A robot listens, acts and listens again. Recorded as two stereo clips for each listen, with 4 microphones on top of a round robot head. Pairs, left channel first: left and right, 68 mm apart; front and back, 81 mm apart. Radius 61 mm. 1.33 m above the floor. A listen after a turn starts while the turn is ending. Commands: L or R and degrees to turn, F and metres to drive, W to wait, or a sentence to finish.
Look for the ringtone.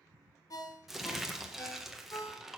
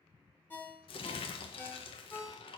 L65
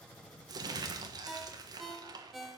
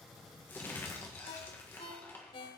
Found it: a ringtone, straight ahead.